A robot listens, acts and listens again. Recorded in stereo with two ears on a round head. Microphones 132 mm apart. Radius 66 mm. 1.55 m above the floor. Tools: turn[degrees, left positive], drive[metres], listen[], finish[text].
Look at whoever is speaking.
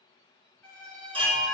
Action: listen[]
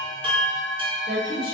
Thought: The woman speaking: about 70° right or 110° right.
Action: turn[-70]
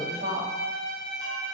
Thought: So it is at 35° right.
Action: turn[-35]
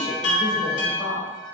Thought: The woman speaking is now 10° right.
Action: turn[-10]
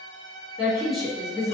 Action: finish[Facing the woman speaking, under 1 m away.]